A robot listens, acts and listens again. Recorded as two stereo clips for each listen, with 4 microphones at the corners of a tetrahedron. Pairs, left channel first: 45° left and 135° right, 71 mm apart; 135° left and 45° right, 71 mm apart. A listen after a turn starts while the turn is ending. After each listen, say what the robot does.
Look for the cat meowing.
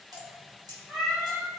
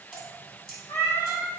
Turn 130° left.
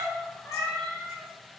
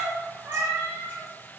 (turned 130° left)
Turn 10° right.
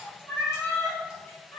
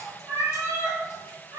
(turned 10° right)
Facing the cat meowing.